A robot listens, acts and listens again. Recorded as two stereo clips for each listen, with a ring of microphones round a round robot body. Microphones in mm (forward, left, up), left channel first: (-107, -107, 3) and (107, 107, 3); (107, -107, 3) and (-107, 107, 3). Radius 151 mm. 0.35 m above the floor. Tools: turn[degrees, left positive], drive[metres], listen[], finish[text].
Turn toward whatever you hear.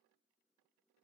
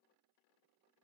Action: listen[]
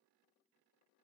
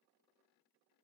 Action: listen[]
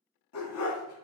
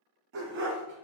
Thought: The dog barking: 170° right.
Action: turn[-170]
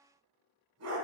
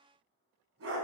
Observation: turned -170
Thought: The dog barking is now 90° left.
Action: turn[90]
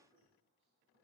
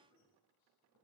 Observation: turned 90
Action: listen[]
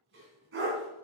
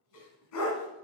Thought: The dog barking is now 10° right.
Action: turn[-10]
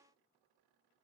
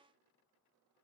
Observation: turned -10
Action: listen[]
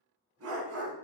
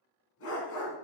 Action: finish[Facing the dog barking, 1 to 2 m away.]